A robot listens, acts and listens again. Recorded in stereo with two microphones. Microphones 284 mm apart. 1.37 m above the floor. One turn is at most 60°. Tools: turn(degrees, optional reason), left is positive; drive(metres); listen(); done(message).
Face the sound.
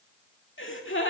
turn(degrees=40, reason="The gasp: about 40° left or 140° left.")
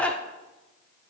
done("Found it: a gasp, straight ahead, 1 to 2 m away.")